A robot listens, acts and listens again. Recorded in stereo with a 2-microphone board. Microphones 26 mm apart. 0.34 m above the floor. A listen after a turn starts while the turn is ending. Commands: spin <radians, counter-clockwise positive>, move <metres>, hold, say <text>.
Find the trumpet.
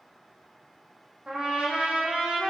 spin -0.70
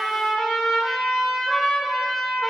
say Facing the trumpet.